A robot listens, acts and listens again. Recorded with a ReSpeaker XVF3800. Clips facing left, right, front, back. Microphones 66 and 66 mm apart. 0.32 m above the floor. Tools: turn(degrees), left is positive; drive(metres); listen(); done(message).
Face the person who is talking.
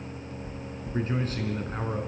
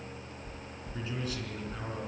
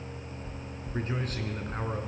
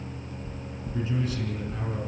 turn(degrees=40)
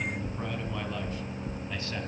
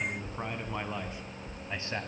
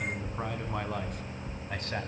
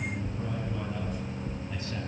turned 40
turn(degrees=-30)
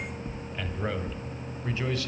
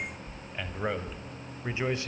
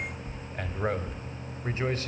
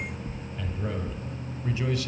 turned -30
turn(degrees=-35)
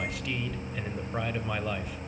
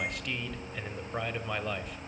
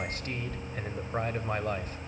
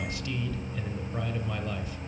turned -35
done("Found it: a man speaking, straight ahead.")